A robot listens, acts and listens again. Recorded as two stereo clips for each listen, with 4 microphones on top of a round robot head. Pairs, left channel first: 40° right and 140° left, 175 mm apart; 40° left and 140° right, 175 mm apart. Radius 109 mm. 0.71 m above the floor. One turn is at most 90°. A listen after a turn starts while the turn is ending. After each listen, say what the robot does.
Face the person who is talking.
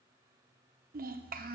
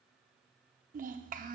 Turn 90° left.
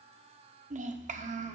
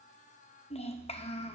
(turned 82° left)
Turn 90° left.
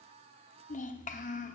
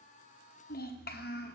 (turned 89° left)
Facing the child speaking.